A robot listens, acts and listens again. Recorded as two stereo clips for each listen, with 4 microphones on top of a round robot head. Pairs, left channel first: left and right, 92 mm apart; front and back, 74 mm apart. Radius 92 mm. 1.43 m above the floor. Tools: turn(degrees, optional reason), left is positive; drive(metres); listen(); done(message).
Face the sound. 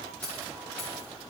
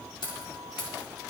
turn(degrees=15, reason="The keys jangling: 15° left.")
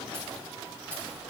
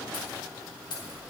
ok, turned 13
turn(degrees=10, reason="The keys jangling is now 10° left.")
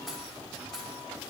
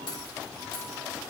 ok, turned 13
done("Found it: keys jangling, straight ahead.")